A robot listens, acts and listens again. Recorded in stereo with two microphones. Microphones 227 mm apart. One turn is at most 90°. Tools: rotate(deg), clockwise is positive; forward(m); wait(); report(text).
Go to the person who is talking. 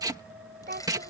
rotate(45)
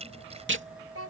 rotate(90)
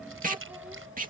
wait()
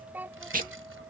rotate(10)
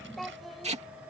forward(1.0)
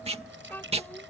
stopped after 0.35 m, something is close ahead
rotate(-10)
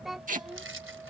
report("Something is in my way. I am facing the child speaking but have not reached it.")